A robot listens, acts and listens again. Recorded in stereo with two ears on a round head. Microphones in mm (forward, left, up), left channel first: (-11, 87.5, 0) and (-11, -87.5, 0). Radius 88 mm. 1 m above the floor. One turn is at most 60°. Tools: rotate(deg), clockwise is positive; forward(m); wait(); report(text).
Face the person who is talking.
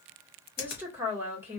rotate(30)
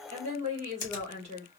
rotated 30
rotate(60)
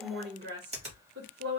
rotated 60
rotate(60)
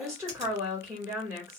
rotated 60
rotate(15)
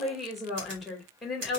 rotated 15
report("Found it: a woman speaking, straight ahead.")